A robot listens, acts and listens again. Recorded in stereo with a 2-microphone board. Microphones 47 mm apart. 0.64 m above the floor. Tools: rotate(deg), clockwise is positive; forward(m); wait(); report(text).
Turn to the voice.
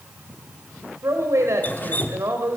rotate(75)
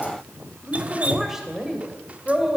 rotate(10)
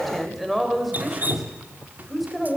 report("Facing the woman speaking.")